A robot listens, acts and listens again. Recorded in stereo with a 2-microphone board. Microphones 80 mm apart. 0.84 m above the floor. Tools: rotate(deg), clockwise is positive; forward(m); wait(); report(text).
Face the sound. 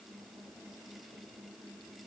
wait()
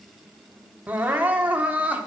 rotate(20)
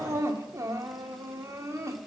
rotate(140)
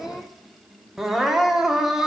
report("Facing the crying.")